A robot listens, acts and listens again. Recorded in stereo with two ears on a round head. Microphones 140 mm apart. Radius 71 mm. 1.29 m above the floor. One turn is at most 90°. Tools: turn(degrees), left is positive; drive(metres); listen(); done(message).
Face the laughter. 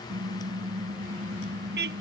listen()
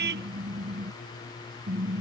listen()
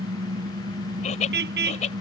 turn(degrees=45)
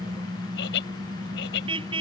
turn(degrees=85)
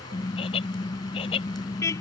turn(degrees=35)
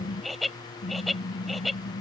done("Facing the laughter.")